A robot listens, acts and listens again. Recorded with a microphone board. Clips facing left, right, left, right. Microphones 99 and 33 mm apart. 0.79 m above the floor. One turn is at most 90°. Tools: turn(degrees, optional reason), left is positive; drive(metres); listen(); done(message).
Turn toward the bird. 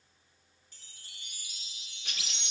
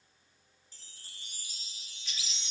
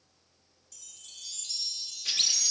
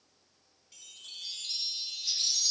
turn(degrees=60, reason="The bird: about 60° left or 120° left.")
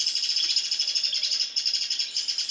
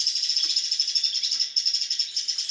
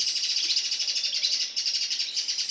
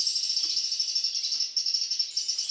turn(degrees=60, reason="So it is at 60° left.")
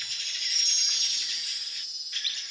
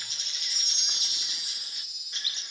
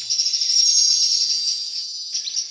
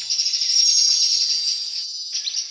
turn(degrees=-20, reason="The bird is now 20° right.")
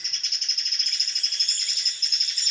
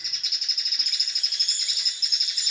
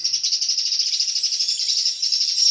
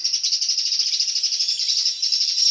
done("Facing the bird.")